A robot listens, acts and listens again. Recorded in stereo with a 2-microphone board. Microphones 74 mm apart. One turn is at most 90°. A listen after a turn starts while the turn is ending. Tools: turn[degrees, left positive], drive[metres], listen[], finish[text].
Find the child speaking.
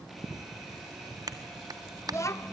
Thought: The child speaking: about 40° left or 140° left.
Action: turn[40]
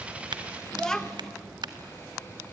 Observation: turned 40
Thought: So it is at 10° left.
Action: turn[10]
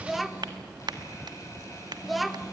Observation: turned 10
Action: finish[Facing the child speaking, under 1 m away.]